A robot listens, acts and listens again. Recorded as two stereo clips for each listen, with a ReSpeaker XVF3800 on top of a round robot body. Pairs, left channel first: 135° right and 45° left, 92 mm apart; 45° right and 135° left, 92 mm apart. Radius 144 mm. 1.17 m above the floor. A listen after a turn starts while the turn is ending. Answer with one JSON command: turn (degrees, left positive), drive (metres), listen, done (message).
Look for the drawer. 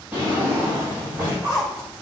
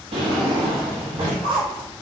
{"turn": 115}
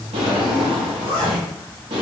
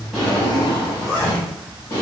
{"turn": 15}
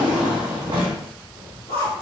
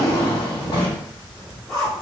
{"done": "Found it: a drawer, straight ahead."}